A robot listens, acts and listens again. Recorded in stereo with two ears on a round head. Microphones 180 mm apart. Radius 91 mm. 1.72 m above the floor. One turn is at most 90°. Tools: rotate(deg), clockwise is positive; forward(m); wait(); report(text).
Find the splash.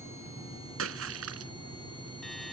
rotate(75)
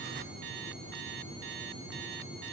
wait()
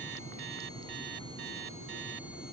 report("I heard a splash, but can't make it out now. It was about straight ahead or 30° right.")